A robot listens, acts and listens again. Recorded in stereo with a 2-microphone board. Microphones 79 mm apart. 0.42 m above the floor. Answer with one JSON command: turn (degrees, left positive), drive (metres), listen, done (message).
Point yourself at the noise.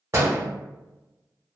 {"turn": -35}
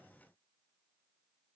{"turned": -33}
{"listen": true}
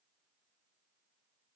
{"done": "I heard a door slam, but can't make it out now. It was about straight ahead or 115° right."}